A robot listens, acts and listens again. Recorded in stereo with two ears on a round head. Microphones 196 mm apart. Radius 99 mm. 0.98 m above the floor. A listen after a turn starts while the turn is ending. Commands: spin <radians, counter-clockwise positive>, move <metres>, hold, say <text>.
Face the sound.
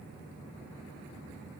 hold
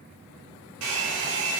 spin -1.22
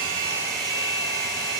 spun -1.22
say Facing the hair dryer, 2 to 4 m away.